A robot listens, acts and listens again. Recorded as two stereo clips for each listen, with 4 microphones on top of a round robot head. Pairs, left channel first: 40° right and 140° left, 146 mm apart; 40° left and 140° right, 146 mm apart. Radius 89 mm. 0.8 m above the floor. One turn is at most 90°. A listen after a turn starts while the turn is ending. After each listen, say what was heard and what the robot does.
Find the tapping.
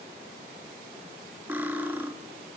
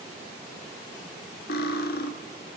Keep listening.
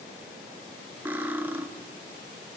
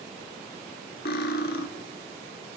Keep listening.
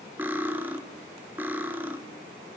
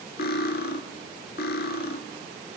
I can't make out tapping, only cutlery clinking.